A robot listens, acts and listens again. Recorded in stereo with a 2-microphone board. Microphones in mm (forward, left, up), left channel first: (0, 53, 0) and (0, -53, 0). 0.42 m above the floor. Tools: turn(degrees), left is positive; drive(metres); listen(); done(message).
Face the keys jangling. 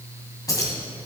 turn(degrees=35)
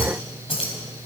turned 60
turn(degrees=60)
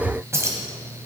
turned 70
turn(degrees=-30)
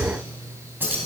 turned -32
turn(degrees=-20)
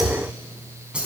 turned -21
turn(degrees=-10)
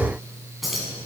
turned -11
done("Found it: keys jangling, straight ahead, 2 to 4 m away.")